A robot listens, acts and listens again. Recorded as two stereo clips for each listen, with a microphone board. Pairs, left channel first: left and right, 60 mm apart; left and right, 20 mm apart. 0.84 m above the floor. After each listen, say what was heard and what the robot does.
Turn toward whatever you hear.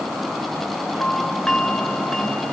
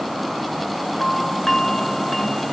Turn 30° left.
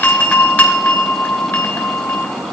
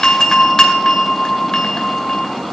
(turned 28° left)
So it is at 150° left. Turn 150° left.
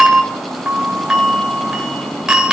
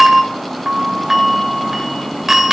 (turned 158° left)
The doorbell is now 10° right. Turn 10° right.
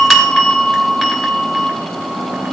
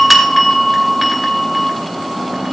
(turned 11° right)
Found it: a doorbell, straight ahead.